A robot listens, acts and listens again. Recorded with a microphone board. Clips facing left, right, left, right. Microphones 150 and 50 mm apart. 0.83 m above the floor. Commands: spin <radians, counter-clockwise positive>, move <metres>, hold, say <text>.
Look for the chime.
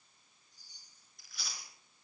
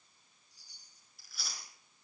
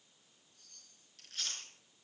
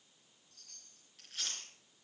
spin -1.57
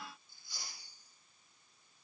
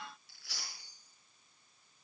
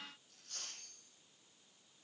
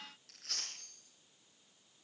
spin 0.17
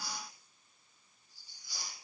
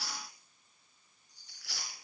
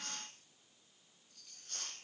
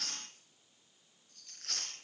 say Facing the chime, over 4 m away.